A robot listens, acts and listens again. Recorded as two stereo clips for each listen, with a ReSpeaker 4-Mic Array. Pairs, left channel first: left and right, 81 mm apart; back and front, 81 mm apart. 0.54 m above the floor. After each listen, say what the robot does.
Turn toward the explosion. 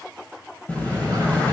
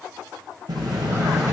Turn 20° left.
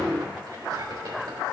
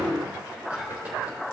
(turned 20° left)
I heard an explosion from this way, but can't make it out now.